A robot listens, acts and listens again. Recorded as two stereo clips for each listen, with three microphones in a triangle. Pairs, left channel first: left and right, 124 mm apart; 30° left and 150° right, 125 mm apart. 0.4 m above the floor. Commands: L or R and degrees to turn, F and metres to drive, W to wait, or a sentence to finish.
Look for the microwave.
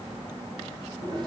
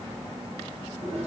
W
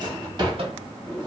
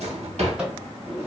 R70
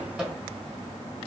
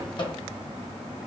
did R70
R10
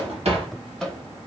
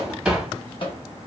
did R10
Facing the microwave.